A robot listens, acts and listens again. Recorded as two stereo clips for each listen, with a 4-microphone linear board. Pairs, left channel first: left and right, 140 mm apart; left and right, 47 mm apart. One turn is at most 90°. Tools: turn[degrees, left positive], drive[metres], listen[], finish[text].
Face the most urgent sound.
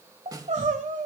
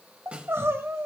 Thought: The crying: about 60° right or 120° right.
Action: turn[-60]
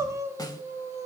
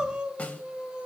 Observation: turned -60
Thought: So it is at 25° right.
Action: turn[-25]
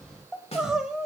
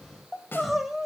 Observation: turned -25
Action: finish[Facing the crying.]